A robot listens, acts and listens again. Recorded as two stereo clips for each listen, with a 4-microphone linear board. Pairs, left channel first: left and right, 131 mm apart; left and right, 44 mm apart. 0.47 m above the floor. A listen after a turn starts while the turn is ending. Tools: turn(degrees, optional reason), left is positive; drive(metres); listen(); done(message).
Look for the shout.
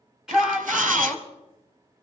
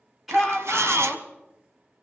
turn(degrees=-30)
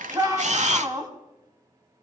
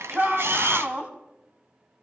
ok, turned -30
turn(degrees=-145, reason="So it is at 145° right.")
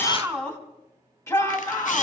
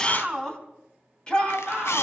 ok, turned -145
turn(degrees=25, reason="The shout is now 25° left.")
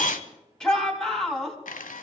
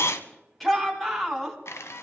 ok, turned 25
done("Found it: a shout, straight ahead, 2 to 4 m away.")